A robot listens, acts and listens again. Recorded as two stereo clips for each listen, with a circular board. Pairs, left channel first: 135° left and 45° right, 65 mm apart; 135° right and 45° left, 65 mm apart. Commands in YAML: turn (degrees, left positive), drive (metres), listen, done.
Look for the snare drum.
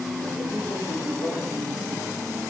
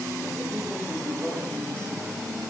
listen: true
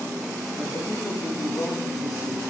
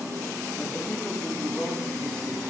listen: true
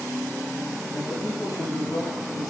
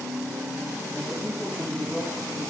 done: "I can't make out a snare drum to turn to."